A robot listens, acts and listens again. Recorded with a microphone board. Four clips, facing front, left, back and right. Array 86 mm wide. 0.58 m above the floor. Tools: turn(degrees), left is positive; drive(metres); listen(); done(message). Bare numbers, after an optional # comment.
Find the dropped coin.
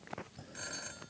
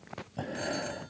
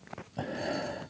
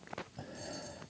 listen()
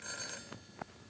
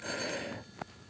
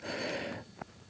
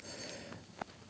listen()
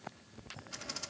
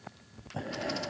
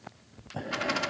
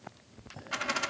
# The dropped coin: 140° right.
turn(-140)
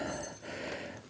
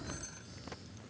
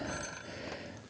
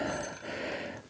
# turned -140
done("Facing where the dropped coin came from. I can't hear it now.")